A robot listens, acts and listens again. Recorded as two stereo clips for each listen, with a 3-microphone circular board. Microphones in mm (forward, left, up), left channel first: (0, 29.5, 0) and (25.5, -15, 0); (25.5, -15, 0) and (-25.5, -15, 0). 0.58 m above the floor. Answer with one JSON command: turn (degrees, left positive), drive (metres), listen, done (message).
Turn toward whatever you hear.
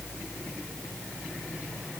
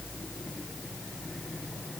{"listen": true}
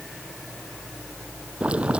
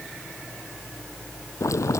{"done": "Facing the boiling."}